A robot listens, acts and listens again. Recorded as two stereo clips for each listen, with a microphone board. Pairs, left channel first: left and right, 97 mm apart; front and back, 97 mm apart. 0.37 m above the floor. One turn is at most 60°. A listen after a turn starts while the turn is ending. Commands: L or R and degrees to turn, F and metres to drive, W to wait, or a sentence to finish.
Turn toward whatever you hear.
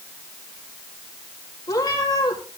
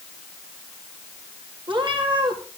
L60
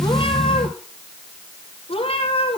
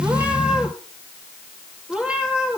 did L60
L60
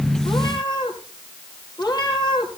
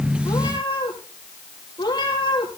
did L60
L45
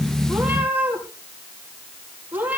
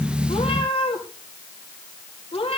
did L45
R20
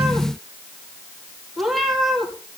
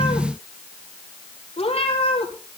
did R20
Facing the cat meowing.